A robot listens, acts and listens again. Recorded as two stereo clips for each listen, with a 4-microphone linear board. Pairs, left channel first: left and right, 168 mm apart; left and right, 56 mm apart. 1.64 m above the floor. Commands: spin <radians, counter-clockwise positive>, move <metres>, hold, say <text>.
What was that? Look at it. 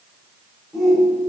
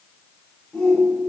spin 0.52
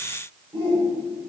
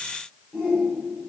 spin -0.52
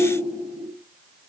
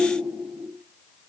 say Found it: a shout, straight ahead, over 4 m away.